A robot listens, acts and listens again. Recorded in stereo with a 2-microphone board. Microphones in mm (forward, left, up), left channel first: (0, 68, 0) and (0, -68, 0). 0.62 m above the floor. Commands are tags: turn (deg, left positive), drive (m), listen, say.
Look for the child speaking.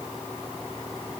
<listen/>
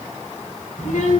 <turn deg="70"/>
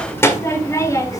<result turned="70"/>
<turn deg="25"/>
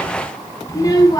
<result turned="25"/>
<turn deg="30"/>
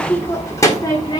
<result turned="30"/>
<turn deg="35"/>
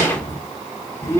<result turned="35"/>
<turn deg="20"/>
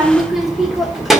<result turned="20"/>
<say>Facing the child speaking, 1 to 2 m away.</say>